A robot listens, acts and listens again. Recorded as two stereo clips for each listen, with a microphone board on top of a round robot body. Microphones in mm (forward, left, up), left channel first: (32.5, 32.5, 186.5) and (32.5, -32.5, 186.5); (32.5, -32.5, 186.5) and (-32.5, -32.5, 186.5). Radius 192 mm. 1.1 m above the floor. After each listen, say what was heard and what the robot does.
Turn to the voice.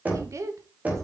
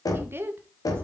The woman speaking: 130° right. Turn 130° right.
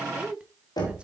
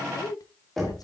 The woman speaking is now 15° right. Turn 15° right.
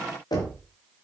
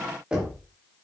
Keep listening.
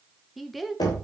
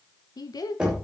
Found it: a woman speaking, straight ahead, 2 to 4 m away.